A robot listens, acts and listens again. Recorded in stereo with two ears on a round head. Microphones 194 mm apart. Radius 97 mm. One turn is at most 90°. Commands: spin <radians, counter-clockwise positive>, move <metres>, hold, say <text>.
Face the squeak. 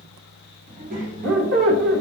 spin -0.96
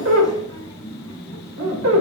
spin -1.22
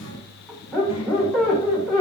say Found it: a squeak, straight ahead.